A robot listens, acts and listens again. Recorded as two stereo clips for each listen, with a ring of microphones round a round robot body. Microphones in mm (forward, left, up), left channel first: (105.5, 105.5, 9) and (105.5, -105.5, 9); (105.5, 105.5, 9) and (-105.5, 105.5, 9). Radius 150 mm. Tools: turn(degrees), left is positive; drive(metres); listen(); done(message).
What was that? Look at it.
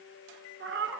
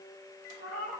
turn(degrees=-60)
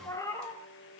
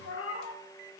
turn(degrees=15)
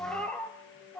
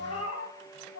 done("Facing the cat meowing, 2 to 4 m away.")